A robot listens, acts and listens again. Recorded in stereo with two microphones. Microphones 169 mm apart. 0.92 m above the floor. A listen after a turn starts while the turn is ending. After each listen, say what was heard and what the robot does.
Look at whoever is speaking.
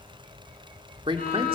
The man speaking: about 30° right or 150° right. Turn 30° right.
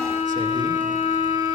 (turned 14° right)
Keep listening.
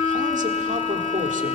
Keep listening.
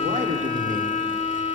I heard a man speaking, but can't make it out now. It was about 20° right or 135° right.